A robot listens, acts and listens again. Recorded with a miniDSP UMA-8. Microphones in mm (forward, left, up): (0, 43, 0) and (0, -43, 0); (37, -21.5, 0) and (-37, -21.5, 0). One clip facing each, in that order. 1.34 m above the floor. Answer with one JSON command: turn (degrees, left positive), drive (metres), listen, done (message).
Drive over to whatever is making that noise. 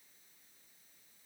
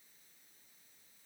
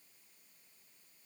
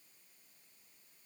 {"listen": true}
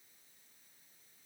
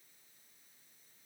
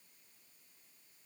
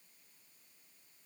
{"listen": true}
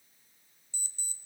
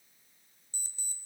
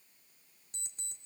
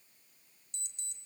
{"turn": -45}
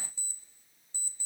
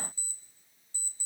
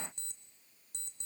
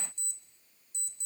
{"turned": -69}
{"turn": 20}
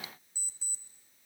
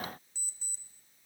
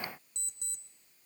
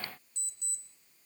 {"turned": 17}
{"drive": 1.0}
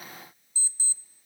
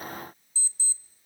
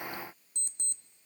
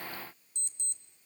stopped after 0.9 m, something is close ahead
{"turn": 20}
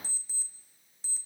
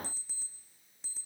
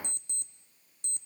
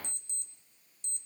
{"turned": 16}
{"done": "I am next to the alarm clock."}